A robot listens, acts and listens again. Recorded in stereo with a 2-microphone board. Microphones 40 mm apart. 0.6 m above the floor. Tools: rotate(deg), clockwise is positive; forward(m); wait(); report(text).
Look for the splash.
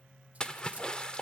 rotate(-20)
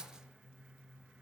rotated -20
wait()
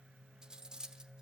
report("I heard a splash, but can't make it out now. It was about straight ahead or 140° left.")